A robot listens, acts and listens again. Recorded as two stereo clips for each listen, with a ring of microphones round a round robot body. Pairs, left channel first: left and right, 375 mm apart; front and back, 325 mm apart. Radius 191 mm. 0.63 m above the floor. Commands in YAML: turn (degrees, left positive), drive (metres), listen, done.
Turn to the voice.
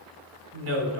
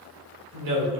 turn: -145
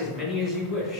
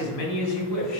done: "Found it: a woman speaking, straight ahead, 2 to 4 m away."